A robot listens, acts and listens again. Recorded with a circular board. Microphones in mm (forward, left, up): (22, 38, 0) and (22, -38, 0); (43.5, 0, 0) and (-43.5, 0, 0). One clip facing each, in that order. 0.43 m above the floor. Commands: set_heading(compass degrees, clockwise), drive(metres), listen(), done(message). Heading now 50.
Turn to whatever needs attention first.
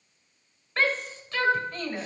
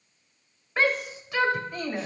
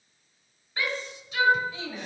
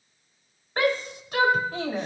set_heading(215)
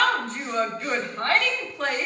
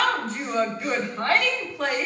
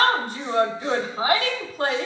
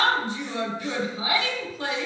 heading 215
done("Facing the shout.")